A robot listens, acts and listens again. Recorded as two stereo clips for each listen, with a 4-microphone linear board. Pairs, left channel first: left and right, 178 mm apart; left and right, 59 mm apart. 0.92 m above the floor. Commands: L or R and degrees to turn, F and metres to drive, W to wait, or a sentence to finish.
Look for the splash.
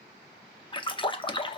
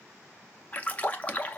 L25
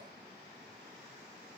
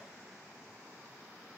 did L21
W
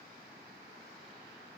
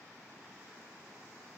I heard a splash, but can't make it out now. It was about 5° left or 130° left.